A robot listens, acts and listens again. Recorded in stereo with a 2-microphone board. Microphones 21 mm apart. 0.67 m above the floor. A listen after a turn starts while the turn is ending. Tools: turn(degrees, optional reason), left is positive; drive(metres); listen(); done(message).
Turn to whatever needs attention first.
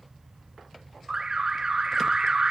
turn(degrees=-30, reason="The alarm: about 30° right or 150° right.")
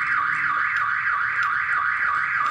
done("Found it: an alarm, straight ahead, under 1 m away.")